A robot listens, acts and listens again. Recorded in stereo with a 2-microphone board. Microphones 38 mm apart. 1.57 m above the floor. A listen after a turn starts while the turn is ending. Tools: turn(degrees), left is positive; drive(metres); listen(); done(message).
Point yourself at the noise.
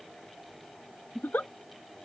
turn(degrees=60)
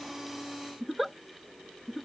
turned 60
done("Found it: a giggle, straight ahead.")